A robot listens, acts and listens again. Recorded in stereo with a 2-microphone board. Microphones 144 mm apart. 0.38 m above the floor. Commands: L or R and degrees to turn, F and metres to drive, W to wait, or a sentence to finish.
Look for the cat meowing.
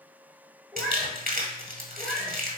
L30
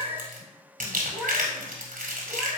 L165
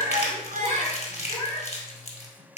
L50
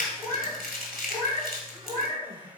L10
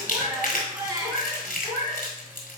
Found it: a cat meowing, straight ahead, 2 to 4 m away.